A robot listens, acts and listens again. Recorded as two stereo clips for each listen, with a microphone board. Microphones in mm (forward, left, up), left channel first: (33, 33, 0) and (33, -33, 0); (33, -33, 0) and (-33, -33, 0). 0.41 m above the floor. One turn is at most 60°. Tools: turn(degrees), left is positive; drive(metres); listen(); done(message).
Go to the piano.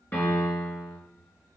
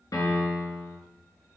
turn(degrees=30)
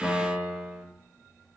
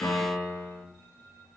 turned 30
drive(metres=1.0)
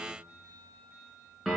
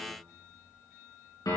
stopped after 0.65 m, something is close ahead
done("Blocked. The piano is further on, straight ahead.")